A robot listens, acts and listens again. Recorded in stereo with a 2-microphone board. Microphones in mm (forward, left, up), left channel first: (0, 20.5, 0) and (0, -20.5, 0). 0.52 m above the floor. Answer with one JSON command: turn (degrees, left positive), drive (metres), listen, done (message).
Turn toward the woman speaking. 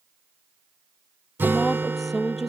{"turn": 30}
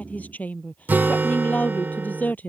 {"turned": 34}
{"turn": 140}
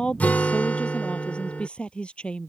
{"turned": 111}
{"turn": 25}
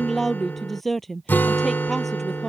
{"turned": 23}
{"done": "Facing the woman speaking."}